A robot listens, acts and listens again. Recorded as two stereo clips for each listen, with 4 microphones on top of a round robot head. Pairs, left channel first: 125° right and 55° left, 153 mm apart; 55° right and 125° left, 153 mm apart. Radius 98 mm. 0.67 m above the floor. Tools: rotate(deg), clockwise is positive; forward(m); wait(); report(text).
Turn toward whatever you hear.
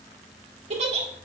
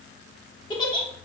report("Found it: a giggle, straight ahead.")